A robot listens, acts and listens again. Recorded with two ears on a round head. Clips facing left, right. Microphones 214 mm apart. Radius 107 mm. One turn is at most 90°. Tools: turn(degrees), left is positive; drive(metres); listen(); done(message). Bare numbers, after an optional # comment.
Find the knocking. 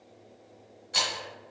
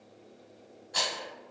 listen()
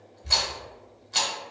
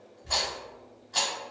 listen()
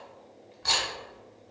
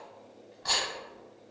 done("I can't make out knocking, only a rattle.")